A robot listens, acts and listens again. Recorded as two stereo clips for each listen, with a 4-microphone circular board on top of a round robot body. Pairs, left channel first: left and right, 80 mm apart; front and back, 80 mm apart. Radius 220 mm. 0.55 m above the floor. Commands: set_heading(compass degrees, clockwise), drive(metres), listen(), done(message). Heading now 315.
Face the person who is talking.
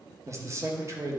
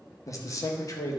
set_heading(355)
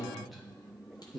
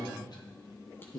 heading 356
done("Found it: a man speaking, straight ahead, 1 to 2 m away.")